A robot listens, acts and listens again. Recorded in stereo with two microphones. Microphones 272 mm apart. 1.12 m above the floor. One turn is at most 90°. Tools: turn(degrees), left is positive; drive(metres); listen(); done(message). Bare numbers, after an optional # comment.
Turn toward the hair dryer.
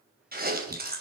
listen()
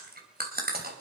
listen()
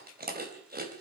done("I can't make out a hair dryer to turn to.")